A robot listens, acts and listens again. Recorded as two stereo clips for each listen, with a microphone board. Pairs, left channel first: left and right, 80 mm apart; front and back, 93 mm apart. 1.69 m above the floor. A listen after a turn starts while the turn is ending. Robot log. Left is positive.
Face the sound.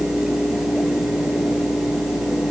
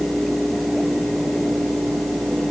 cmd idle
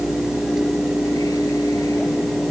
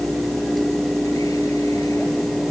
cmd idle
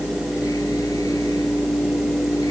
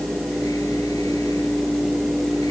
end: I can't make out anything to turn to.